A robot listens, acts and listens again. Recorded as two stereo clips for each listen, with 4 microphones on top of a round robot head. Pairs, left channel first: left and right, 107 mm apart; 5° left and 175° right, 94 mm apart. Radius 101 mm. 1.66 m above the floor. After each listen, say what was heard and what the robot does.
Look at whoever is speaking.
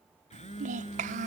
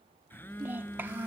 The child speaking: 100° right. Turn 100° right.
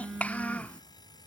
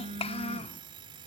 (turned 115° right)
The child speaking is now 15° left. Turn 15° left.
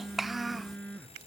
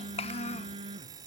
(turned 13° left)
Found it: a child speaking, straight ahead.